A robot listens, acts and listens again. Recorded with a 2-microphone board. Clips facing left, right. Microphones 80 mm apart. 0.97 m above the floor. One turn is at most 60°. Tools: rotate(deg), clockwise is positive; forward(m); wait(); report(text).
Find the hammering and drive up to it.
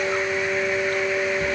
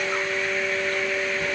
wait()
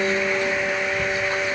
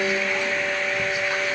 wait()
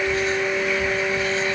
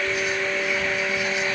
report("I can't make out hammering to turn to.")